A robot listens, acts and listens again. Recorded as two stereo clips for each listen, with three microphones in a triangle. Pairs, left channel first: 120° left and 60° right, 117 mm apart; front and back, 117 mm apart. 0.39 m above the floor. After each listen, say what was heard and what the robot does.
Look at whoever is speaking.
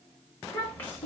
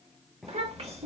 The child speaking: 170° right. Turn 170° right.
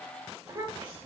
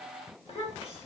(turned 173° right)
Found it: a child speaking, straight ahead.